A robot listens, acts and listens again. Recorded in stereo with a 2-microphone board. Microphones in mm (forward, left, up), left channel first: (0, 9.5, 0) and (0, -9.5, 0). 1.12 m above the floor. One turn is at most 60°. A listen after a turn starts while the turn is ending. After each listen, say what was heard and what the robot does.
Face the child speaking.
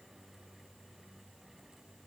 Keep listening.
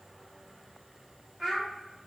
The child speaking: about 25° right or 155° right. Turn 25° right.
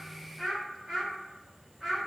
The child speaking: about 20° right or 160° right. Turn 20° right.
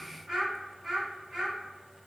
The child speaking: about 30° right or 150° right. Turn 30° right.
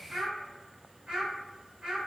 So it is at 120° right. Turn 60° right.
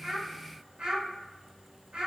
The child speaking is now 75° right. Turn 60° right.
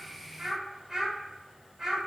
The child speaking is now 15° right. Turn 15° right.
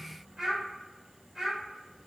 Facing the child speaking, 2 to 4 m away.